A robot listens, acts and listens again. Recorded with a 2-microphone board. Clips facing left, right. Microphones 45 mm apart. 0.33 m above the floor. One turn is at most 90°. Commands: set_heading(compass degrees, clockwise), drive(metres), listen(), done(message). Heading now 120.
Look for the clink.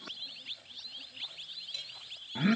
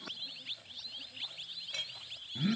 set_heading(180)
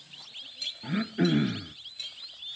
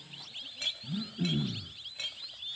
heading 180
set_heading(230)
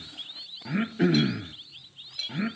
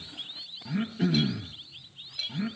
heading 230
done("Found it: a clink, straight ahead, under 1 m away.")